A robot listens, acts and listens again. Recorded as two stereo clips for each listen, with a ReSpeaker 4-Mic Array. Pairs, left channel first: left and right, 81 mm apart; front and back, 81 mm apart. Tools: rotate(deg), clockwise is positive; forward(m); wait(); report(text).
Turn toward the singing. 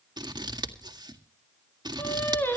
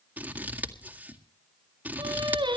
rotate(-155)
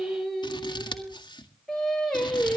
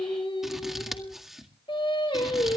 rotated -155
report("Facing the singing, over 4 m away.")